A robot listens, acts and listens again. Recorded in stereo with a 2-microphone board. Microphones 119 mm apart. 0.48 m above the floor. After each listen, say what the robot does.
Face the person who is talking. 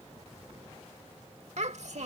Turn 70° right.
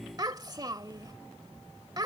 Turn 35° right.
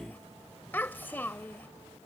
Turn 15° left.
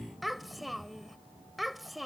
Facing the child speaking.